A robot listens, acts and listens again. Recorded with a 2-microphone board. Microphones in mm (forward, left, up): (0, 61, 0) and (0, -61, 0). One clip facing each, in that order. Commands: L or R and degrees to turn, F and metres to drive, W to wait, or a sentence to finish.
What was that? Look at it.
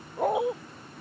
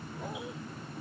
L65
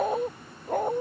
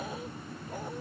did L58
L55
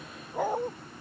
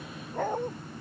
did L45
L10
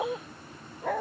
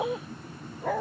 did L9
Facing the dog barking.